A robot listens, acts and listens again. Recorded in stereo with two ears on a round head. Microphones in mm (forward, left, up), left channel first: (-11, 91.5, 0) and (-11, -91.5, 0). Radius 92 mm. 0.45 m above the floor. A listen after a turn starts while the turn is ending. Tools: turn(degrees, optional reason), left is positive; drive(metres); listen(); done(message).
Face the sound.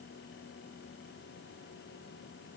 listen()
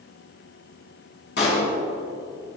turn(degrees=55, reason="The pop: about 55° left or 125° left.")
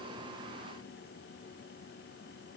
listen()
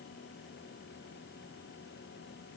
done("I heard a pop, but can't make it out now. It was about straight ahead or 70° left.")